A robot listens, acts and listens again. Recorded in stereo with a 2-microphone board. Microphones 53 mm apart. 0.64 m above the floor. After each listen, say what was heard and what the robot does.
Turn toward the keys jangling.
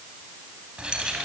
The keys jangling: about 15° right or 165° right. Turn 15° right.
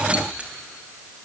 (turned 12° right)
The keys jangling: about 25° right or 155° right. Turn 25° right.
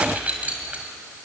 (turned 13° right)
The keys jangling: about 25° right or 155° right. Turn 25° right.
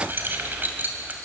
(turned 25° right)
The keys jangling: about 35° right or 145° right. Turn 35° right.
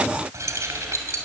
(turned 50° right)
So it is at 110° right. Turn 110° right.
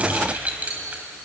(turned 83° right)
The keys jangling is now 30° right. Turn 30° right.
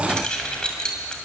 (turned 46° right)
The keys jangling is now 15° left. Turn 15° left.
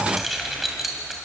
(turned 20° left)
Facing the keys jangling, 2 to 4 m away.